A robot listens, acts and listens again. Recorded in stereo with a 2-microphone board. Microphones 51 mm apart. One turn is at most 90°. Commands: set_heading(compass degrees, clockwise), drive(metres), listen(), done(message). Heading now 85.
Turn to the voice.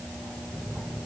listen()
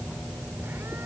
listen()
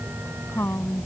set_heading(30)
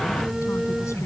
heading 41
listen()
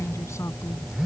listen()
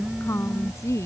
set_heading(321)
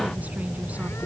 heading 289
set_heading(324)
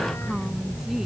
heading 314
set_heading(324)
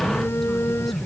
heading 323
done("I heard a woman speaking from this way, but can't make it out now.")